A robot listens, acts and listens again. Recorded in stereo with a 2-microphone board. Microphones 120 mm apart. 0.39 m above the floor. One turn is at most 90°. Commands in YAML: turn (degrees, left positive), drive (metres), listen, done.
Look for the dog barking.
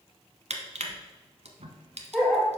turn: 30
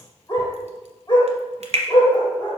turn: 90
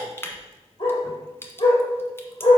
turn: 50
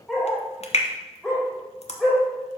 done: "Facing the dog barking."